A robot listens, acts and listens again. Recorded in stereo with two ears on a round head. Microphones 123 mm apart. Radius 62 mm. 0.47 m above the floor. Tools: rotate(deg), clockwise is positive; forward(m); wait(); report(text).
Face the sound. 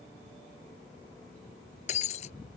rotate(-50)
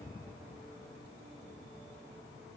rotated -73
wait()
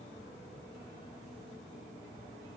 report("I heard breaking glass, but can't make it out now. It was about 20° right or 55° left.")